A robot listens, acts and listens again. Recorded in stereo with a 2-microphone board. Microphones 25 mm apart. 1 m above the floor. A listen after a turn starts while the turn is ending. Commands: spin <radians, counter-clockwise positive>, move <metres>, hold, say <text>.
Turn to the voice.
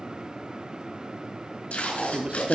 spin -0.79
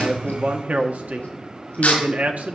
spin -1.57
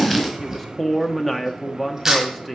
say Facing the man speaking, 1 to 2 m away.